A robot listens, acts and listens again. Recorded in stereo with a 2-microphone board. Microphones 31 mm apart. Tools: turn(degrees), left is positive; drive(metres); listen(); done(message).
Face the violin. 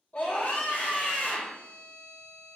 turn(degrees=35)
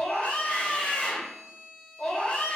done("Found it: a violin, straight ahead, 1 to 2 m away.")